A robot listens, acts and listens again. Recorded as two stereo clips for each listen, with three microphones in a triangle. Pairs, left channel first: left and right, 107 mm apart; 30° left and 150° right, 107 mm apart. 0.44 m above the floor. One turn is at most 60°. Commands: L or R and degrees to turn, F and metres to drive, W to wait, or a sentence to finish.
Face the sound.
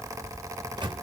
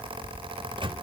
R60
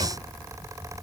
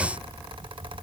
R60
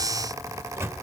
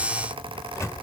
R30
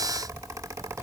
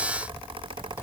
W
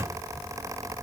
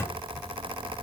R35
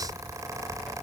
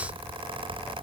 W
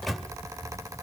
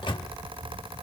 Found it: a microwave, straight ahead.